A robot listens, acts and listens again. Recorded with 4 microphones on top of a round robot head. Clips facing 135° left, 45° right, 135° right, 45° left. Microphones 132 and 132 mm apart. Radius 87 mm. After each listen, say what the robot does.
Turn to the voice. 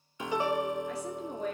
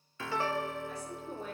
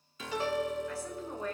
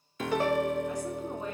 Turn 115° left.
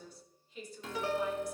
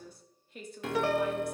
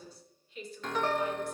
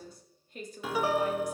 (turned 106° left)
Found it: a woman speaking, straight ahead, 2 to 4 m away.